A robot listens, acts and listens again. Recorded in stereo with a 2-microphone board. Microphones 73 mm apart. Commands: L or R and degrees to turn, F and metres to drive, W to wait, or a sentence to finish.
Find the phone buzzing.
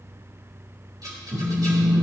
R65
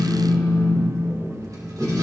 Facing the phone buzzing.